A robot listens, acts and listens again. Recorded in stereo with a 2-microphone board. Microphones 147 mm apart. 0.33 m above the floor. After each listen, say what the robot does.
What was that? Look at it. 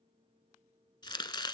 Turn 30° left.
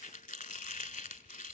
Turn 120° left.
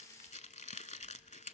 Turn 55° left.
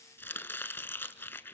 Turn 15° left.
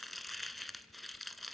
Facing the chopping.